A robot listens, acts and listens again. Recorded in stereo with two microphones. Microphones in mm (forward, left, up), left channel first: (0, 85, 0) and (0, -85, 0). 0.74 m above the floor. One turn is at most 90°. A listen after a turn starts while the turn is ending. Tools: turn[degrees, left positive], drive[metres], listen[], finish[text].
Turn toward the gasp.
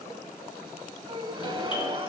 Thought: The gasp: about 30° right or 150° right.
Action: turn[-30]
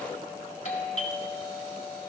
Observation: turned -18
Action: listen[]
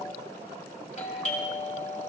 Action: finish[I heard a gasp, but can't make it out now. It was about 15° right or 130° right.]